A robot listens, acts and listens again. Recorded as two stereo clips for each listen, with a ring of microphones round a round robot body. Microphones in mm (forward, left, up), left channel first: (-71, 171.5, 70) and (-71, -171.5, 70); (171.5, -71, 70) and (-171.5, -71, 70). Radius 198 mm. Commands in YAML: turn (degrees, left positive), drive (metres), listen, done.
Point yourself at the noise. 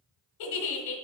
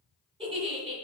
turn: 105
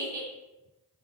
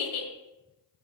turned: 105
turn: -10
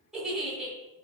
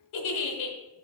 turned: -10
done: "Facing the giggle, 1 to 2 m away."